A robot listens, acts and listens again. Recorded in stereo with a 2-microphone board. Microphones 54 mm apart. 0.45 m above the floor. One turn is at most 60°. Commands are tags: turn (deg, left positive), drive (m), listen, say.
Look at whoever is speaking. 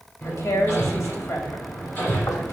<turn deg="60"/>
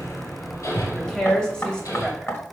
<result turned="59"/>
<turn deg="15"/>
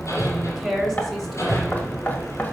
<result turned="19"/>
<say>Facing the woman speaking, 2 to 4 m away.</say>